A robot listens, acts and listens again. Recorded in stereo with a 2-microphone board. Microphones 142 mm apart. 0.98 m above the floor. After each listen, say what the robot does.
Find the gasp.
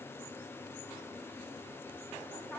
Keep listening.
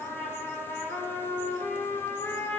Keep listening.
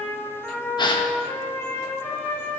Turn 30° left.
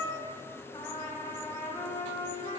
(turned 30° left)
Keep listening.
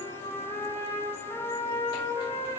I heard a gasp, but can't make it out now. It was about straight ahead or 120° left.